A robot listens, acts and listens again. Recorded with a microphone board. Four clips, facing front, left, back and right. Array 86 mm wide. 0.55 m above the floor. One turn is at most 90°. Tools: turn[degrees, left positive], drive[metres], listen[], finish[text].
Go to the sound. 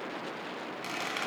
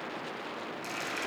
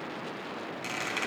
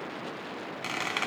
Thought: The squeak: 95° right.
Action: turn[-90]
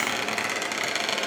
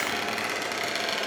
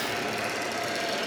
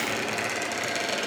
Thought: The squeak is now 15° left.
Action: turn[15]
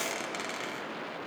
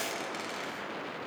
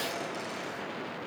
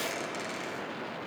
Action: listen[]
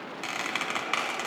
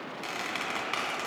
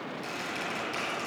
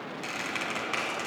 Action: drive[1.0]
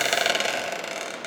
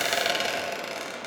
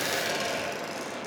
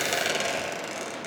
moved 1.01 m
Thought: The squeak is now 10° left.
Action: turn[10]
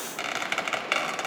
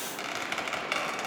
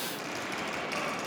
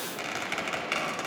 Action: drive[1.0]
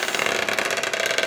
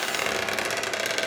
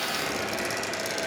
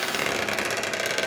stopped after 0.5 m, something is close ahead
Action: finish[I am next to the squeak.]